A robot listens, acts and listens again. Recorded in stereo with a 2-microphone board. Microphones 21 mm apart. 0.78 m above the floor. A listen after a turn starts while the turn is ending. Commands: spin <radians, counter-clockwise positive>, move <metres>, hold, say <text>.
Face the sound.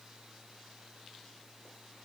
hold
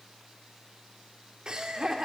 spin -0.61
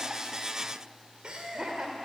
spin -0.70
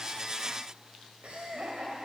spin -1.92
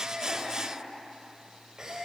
spin -0.52
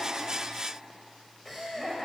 spin 0.17
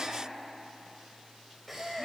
say Facing the laughter, 2 to 4 m away.